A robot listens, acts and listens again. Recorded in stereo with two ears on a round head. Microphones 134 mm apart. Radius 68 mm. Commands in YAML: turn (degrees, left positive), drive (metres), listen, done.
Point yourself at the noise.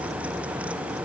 listen: true
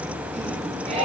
turn: -45
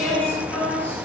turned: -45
turn: 10
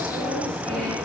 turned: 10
listen: true
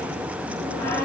turn: 15
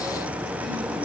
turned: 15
listen: true
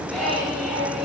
done: "Found it: singing, straight ahead, over 4 m away."